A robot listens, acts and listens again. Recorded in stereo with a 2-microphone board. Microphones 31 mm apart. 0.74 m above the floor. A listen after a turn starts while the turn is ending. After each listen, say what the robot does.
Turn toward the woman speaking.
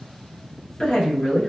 Turn 30° left.
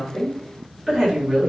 Turn 15° right.
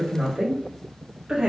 Turn 25° right.
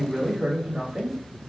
Turn 25° right.
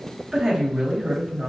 Turn 15° right.
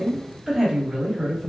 Found it: a woman speaking, straight ahead, 1 to 2 m away.